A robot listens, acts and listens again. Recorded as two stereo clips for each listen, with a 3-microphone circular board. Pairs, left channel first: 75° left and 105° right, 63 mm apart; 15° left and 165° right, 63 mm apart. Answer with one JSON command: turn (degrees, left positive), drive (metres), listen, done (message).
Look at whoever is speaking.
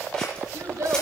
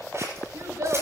{"turn": -135}
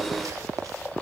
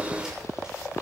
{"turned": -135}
{"listen": true}
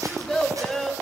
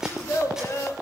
{"turn": -10}
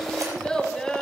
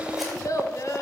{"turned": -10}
{"done": "Facing the child speaking."}